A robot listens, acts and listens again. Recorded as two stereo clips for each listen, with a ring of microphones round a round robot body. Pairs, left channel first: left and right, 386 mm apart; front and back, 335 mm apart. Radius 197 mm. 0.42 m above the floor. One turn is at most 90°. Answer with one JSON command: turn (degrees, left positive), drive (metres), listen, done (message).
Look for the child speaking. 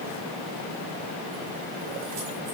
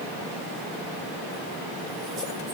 {"listen": true}
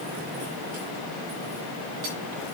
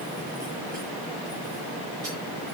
{"listen": true}
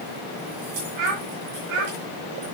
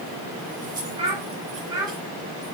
{"turn": -90}
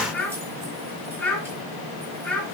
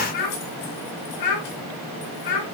{"done": "Found it: a child speaking, straight ahead."}